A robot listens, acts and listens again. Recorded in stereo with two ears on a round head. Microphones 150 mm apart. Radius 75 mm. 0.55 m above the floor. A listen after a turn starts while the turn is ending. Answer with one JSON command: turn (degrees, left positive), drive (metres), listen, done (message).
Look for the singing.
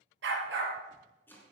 {"listen": true}
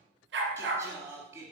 {"turn": -30}
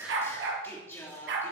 {"turn": 15}
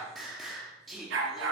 {"done": "Facing the singing."}